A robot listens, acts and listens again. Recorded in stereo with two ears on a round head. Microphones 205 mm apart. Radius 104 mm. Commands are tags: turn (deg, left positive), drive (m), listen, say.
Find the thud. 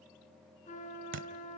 <turn deg="-55"/>
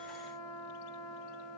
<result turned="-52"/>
<listen/>
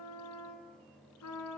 <say>I heard a thud, but can't make it out now. It was about 5° right or 70° right.</say>